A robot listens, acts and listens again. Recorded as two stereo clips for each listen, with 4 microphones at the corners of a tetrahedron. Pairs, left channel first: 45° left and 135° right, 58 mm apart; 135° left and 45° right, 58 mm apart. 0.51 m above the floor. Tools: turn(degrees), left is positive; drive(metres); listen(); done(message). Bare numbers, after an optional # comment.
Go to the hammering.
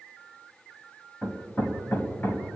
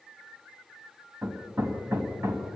# The hammering: 10° right.
turn(-10)
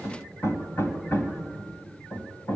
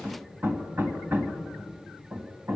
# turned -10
drive(1.0)
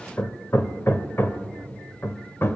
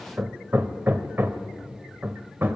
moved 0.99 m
drive(1.0)
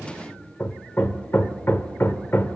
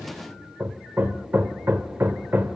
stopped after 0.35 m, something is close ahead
done("Arrived at the hammering, straight ahead.")